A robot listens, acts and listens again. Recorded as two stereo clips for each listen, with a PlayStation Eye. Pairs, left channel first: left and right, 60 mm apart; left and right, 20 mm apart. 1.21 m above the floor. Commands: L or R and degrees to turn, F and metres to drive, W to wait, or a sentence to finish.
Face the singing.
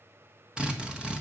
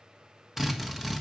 W
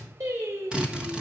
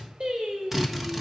R90
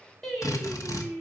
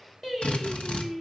L15
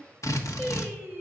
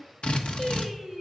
L10
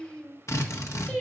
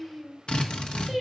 L15
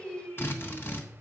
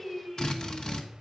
Found it: singing, straight ahead.